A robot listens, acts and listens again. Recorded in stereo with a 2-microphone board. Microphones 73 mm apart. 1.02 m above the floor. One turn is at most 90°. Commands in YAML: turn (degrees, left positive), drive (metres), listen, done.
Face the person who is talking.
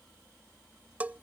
listen: true
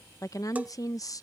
turn: 50
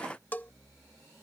listen: true
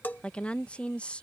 turn: 20
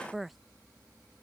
done: "Facing the woman speaking."